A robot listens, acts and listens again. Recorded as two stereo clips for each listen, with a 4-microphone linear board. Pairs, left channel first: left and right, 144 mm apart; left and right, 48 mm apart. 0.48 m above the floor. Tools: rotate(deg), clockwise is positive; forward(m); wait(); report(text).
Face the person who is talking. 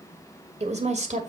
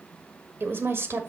rotate(60)
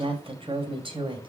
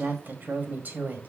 rotate(35)
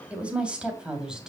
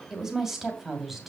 report("Facing the woman speaking, 2 to 4 m away.")